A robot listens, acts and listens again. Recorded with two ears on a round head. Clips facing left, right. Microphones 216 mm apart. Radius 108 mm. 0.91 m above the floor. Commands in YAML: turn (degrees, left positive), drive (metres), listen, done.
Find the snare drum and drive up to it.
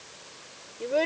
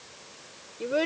listen: true
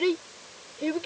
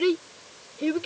listen: true
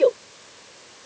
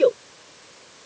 done: "I can't make out a snare drum, only a child speaking."